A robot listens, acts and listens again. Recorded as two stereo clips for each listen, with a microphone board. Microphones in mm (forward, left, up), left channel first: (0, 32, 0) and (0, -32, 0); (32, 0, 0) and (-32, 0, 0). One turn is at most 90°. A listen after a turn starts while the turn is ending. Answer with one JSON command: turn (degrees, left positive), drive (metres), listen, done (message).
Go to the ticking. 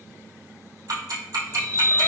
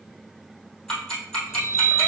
{"turn": -80}
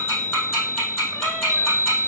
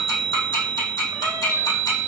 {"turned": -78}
{"drive": 1.0}
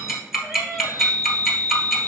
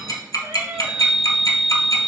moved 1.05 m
{"drive": 1.0}
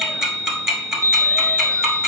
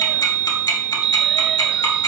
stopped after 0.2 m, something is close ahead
{"done": "Arrived at the ticking, straight ahead."}